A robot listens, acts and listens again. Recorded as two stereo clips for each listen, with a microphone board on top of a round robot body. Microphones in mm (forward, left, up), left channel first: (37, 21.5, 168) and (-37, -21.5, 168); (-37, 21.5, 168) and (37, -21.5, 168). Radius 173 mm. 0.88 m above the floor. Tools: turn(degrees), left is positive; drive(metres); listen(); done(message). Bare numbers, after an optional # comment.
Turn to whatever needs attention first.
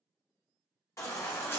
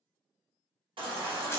# The baby crying: 25° right.
turn(-25)
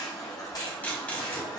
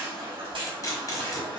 # The baby crying is now 15° right.
turn(-15)
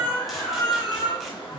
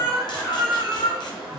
done("Found it: a baby crying, straight ahead, 1 to 2 m away.")